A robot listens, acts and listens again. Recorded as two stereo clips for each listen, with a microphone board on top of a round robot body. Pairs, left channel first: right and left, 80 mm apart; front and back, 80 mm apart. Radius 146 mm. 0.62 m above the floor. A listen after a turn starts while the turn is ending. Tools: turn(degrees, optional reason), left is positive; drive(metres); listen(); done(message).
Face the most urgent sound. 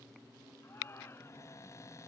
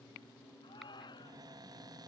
turn(degrees=-30, reason="The shout: 30° right.")
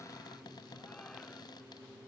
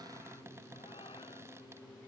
listen()
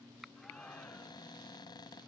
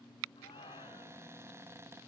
turn(degrees=-10, reason="The shout is now 10° right.")
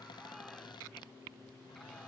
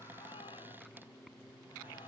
listen()
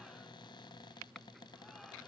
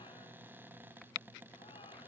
listen()
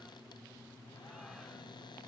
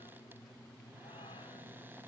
done("Facing where the shout came from. I can't hear it now.")